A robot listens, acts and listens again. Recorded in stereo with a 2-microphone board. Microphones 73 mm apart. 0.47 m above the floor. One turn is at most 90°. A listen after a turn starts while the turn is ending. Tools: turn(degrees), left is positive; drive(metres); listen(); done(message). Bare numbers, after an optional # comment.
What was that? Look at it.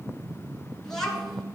turn(30)
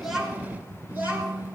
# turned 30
# So it is at 30° right.
turn(-30)
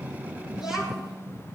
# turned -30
# The child speaking is now 10° right.
turn(-10)
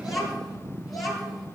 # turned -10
done("Found it: a child speaking, straight ahead, over 4 m away.")